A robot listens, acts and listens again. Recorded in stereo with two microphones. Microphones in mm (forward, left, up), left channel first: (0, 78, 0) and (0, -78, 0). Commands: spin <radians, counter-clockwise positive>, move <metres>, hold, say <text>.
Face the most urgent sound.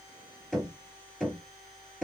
hold
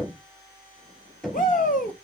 spin 1.05
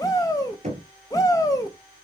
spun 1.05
spin 0.44
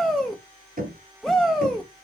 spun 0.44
say Found it: a shout, straight ahead.